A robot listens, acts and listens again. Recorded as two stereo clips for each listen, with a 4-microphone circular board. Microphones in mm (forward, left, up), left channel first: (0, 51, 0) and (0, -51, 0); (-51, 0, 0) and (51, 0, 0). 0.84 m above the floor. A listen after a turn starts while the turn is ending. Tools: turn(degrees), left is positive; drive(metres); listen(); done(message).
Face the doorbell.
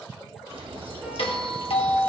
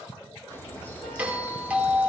turn(degrees=75)
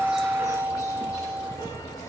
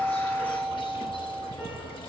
turn(degrees=-25)
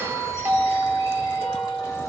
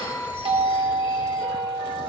turn(degrees=-25)
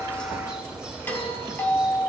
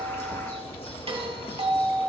turn(degrees=20)
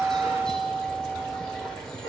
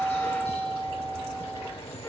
done("Found it: a doorbell, straight ahead, 2 to 4 m away.")